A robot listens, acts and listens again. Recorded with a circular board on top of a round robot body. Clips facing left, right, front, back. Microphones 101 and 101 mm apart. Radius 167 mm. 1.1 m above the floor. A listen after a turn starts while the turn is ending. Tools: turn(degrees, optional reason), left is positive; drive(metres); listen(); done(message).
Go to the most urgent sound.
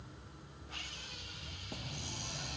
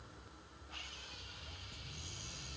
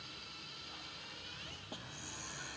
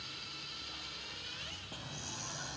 listen()
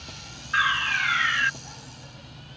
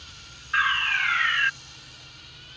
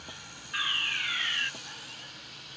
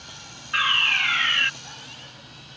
turn(degrees=175, reason="The fire alarm: 175° left.")
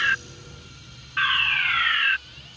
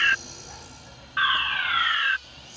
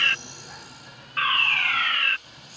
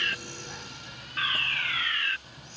turn(degrees=-20, reason="The fire alarm is now 20° right.")
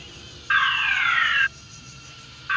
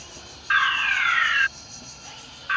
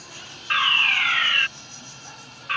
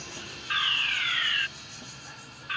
drive(metres=1.0)
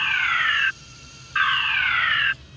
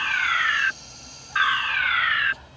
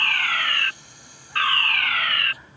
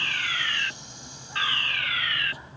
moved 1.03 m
drive(metres=1.0)
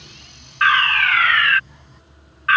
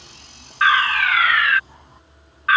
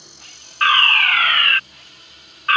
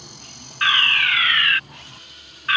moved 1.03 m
drive(metres=1.0)
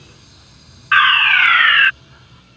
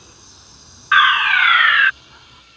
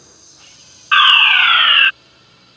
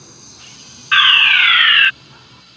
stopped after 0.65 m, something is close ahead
turn(degrees=-10, reason="The fire alarm is now 10° right.")
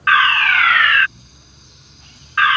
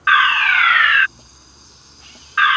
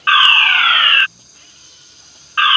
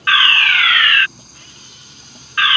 done("Arrived at the fire alarm, straight ahead.")